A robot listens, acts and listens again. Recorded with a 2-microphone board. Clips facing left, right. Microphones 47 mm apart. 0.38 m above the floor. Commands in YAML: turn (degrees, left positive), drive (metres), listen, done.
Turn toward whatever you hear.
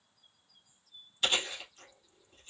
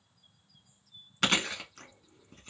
turn: -90
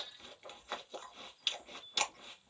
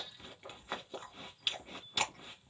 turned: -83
turn: -10
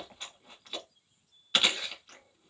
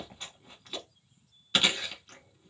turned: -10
done: "Found it: chewing, straight ahead."